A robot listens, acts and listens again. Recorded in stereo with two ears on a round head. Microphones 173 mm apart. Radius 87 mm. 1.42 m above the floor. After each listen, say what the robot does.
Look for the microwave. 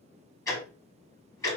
Keep listening.
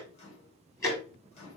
Turn 30° left.
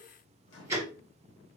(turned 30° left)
Turn 115° left.
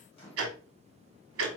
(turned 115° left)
Turn 30° left.
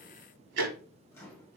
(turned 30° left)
Turn 15° left.
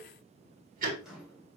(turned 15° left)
Found it: a microwave, straight ahead, 1 to 2 m away.